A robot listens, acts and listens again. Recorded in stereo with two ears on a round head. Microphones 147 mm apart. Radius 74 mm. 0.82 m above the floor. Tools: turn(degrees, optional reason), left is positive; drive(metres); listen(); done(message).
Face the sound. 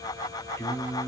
turn(degrees=30)
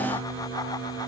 turn(degrees=-35, reason="So it is at 35° right.")
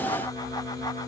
done("Facing the singing.")